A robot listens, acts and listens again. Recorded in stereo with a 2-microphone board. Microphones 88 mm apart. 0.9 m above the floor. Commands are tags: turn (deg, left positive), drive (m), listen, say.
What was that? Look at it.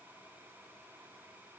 <listen/>
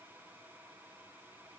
<listen/>
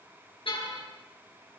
<turn deg="90"/>
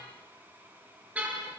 <turn deg="-15"/>
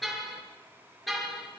<say>Found it: a car horn, straight ahead.</say>